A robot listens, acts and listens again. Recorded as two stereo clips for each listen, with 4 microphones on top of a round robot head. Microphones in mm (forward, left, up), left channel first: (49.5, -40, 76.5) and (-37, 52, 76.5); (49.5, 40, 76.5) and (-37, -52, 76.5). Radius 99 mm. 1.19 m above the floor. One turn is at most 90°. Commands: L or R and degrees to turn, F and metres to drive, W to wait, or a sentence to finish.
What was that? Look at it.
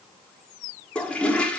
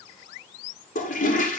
L35
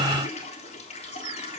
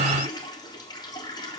W
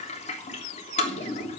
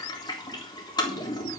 R10
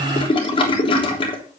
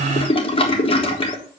Found it: a toilet flushing, straight ahead.